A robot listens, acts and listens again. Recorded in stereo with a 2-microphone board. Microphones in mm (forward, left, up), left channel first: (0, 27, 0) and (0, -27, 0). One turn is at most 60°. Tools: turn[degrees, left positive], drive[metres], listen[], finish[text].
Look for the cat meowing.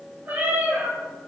Thought: The cat meowing: about 35° right or 145° right.
Action: turn[-35]
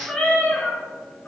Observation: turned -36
Thought: So it is at 25° left.
Action: turn[25]
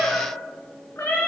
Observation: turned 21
Thought: The cat meowing is now 55° left.
Action: turn[55]
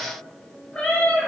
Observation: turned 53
Thought: The cat meowing is now 25° left.
Action: turn[25]
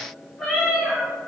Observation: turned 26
Thought: The cat meowing is now 10° left.
Action: turn[10]
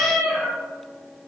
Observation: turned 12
Action: finish[Found it: a cat meowing, straight ahead.]